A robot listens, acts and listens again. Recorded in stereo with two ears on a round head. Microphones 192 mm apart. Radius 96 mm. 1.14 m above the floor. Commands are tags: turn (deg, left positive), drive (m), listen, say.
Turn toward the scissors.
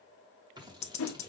<turn deg="-20"/>
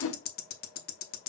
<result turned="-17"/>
<listen/>
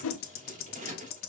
<turn deg="-145"/>
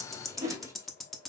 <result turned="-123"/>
<turn deg="-15"/>
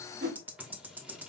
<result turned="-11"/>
<say>Found it: scissors, straight ahead, 1 to 2 m away.</say>